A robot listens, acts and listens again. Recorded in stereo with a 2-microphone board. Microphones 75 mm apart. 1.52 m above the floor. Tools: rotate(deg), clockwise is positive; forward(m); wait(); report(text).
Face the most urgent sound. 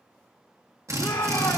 rotate(-70)
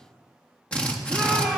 rotate(-15)
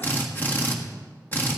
wait()
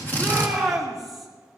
report("Found it: a shout, straight ahead.")